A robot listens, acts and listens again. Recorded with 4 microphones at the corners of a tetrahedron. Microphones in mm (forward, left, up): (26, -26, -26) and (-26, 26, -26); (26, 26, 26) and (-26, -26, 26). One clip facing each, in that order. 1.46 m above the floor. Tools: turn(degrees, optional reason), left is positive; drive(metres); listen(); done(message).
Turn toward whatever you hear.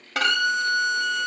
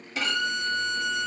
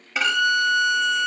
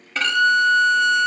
turn(degrees=-35, reason="The violin: 35° right.")
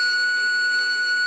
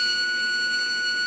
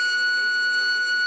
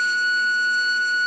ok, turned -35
done("Facing the violin, under 1 m away.")